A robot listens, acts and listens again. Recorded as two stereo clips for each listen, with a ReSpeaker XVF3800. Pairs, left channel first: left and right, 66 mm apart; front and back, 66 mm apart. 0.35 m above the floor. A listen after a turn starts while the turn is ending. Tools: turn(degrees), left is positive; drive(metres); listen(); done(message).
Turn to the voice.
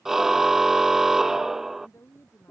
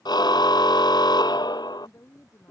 turn(degrees=45)
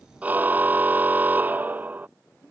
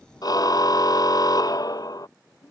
turn(degrees=25)
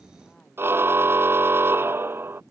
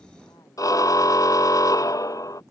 listen()
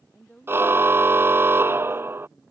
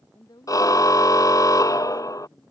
turn(degrees=15)
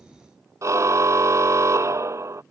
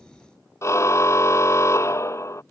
listen()
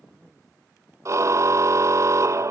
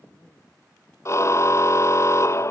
listen()
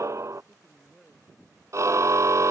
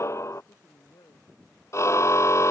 done("Facing the woman speaking.")